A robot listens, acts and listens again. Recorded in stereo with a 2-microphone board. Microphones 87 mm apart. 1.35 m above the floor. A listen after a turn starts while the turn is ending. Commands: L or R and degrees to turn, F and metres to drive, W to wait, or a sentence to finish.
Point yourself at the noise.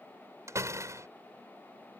R40
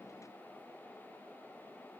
W
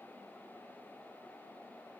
I heard a door slam, but can't make it out now. It was about straight ahead or 100° right.